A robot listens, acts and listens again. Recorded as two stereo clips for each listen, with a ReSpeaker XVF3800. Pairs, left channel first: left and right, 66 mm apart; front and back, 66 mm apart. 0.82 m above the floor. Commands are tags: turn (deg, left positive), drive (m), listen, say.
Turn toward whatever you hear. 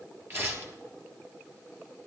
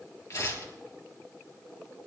<turn deg="-40"/>
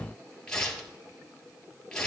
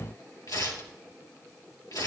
<turn deg="10"/>
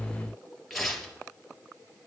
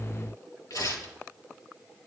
<say>Found it: tearing paper, straight ahead.</say>